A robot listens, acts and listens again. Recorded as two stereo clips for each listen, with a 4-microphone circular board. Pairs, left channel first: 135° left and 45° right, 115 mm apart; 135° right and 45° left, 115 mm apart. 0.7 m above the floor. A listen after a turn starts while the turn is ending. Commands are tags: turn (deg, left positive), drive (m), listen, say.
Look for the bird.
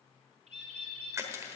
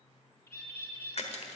<turn deg="-65"/>
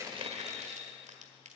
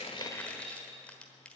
<listen/>
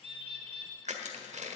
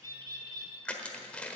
<turn deg="-10"/>
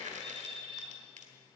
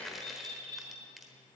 <say>Found it: a bird, straight ahead.</say>